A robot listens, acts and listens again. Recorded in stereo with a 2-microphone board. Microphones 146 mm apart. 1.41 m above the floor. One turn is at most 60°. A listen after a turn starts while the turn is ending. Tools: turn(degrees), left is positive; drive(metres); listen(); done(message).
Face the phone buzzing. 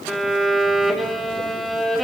listen()
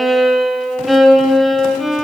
listen()
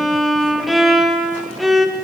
done("I can't make out a phone buzzing, only a violin.")